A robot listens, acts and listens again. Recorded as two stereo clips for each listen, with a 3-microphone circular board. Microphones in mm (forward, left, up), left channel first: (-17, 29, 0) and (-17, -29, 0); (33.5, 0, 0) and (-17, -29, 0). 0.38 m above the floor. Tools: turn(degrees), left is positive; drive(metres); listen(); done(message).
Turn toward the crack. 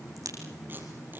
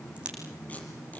turn(degrees=-80)
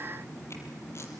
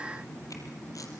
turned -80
done("I heard a crack from this way, but can't make it out now.")